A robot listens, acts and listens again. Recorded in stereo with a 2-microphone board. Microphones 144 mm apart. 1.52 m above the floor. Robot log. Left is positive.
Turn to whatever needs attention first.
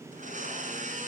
cmd idle
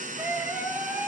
cmd yaw -30
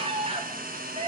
note: So it is at 140° right.
cmd yaw -140
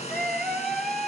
end: Found it: a scream, straight ahead, 2 to 4 m away.